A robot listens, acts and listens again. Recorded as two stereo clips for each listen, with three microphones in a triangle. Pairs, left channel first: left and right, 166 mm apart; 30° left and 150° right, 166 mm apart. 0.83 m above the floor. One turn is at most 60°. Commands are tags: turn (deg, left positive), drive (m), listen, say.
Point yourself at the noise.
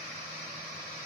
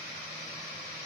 <listen/>
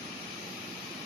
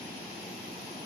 <listen/>
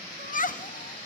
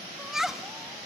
<turn deg="60"/>
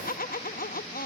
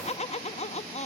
<turn deg="60"/>
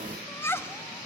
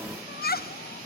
<turn deg="15"/>
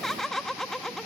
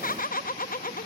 <say>Facing the laughter, under 1 m away.</say>